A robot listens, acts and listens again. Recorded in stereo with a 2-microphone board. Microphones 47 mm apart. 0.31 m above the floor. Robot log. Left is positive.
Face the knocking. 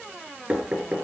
note: The knocking: about 30° right or 150° right.
cmd yaw -30
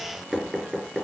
end: Found it: knocking, straight ahead, 2 to 4 m away.